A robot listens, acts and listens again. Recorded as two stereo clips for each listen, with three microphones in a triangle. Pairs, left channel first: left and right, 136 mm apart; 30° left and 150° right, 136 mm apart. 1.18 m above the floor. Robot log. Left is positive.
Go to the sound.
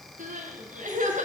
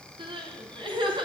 note: The crying: 100° right.
cmd yaw -100
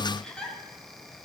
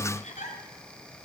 cmd fwd 1.0
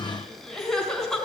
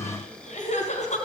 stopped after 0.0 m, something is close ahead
end: Something is in my way. I am facing the crying but have not reached it.